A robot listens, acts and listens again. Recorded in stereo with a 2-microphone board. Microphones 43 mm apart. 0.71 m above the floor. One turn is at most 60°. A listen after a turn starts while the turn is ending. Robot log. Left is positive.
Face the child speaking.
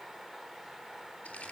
cmd idle
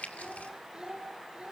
note: The child speaking: about 20° right or 160° right.
cmd yaw -20
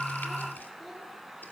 cmd idle
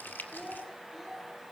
end: Facing the child speaking.